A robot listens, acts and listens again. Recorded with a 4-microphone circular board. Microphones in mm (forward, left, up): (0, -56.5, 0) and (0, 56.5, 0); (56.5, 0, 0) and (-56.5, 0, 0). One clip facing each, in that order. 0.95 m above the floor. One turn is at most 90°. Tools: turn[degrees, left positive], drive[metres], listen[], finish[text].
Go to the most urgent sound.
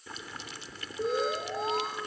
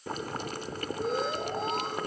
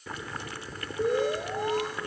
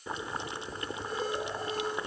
Action: drive[1.0]
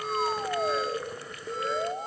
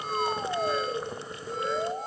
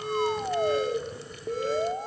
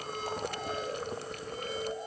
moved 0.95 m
Action: drive[1.0]
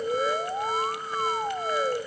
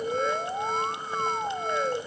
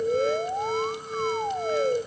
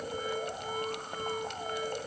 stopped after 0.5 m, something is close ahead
Action: finish[I am next to the alarm.]